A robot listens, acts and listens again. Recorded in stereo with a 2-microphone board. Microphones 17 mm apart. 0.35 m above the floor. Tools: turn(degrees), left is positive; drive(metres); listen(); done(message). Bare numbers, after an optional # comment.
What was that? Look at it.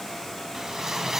# The whoosh: about 20° right or 160° right.
turn(-20)
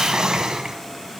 # So it is at 140° right.
turn(-140)
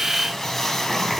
# The whoosh is now 15° left.
turn(15)
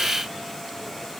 listen()
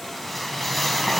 done("Found it: a whoosh, straight ahead.")